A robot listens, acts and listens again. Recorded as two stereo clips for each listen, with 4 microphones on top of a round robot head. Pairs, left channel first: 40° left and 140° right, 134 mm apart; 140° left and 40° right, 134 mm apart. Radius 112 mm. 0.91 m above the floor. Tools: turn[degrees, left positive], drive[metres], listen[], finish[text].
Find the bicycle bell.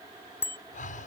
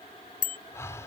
Thought: The bicycle bell: 115° left.
Action: turn[115]
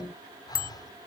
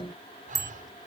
Thought: The bicycle bell is now 25° left.
Action: turn[25]
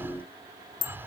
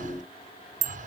Thought: The bicycle bell is now 15° right.
Action: turn[-15]
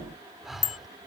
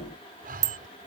Action: finish[Facing the bicycle bell.]